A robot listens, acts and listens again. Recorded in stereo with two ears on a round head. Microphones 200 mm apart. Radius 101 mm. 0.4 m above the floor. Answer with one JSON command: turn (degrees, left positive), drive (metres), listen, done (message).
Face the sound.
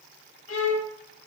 {"turn": 65}
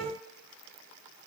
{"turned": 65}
{"turn": 10}
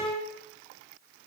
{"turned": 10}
{"done": "Found it: a violin, straight ahead."}